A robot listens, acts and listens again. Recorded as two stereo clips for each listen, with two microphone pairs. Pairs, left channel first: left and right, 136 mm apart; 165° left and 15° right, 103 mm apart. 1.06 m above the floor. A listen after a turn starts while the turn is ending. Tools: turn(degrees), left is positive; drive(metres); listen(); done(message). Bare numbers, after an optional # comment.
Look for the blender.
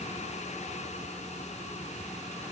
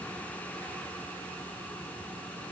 listen()
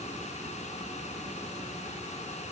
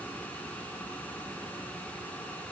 listen()
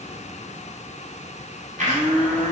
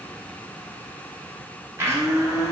# The blender: 75° right.
turn(-75)
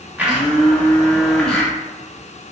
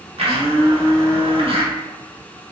done("Found it: a blender, straight ahead, under 1 m away.")